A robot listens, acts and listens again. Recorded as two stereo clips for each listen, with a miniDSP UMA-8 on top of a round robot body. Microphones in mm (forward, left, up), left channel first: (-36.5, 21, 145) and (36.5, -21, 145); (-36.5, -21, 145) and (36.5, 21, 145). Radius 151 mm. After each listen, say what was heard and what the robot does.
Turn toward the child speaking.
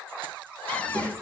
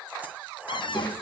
The child speaking: 90° right. Turn 90° right.
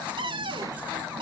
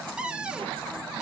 Keep listening.
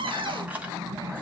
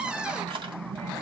The child speaking is now 25° left. Turn 25° left.
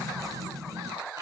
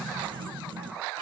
The child speaking is now 10° left. Turn 10° left.
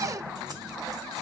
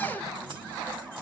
Facing the child speaking.